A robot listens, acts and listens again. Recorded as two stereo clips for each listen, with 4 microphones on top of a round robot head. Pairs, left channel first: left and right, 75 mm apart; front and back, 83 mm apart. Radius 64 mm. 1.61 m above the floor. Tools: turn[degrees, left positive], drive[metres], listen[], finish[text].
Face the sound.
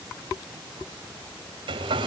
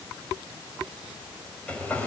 Thought: The hair dryer: 80° right.
Action: turn[-80]
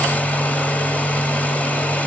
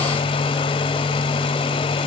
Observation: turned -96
Thought: The hair dryer is now 20° left.
Action: turn[20]
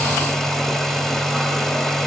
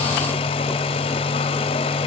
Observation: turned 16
Action: finish[Found it: a hair dryer, straight ahead, over 4 m away.]